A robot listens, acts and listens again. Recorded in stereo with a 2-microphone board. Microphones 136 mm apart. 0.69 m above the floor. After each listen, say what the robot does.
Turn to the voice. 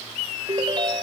Keep listening.
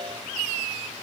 Keep listening.
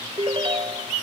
I can't make out anyone speaking to turn to.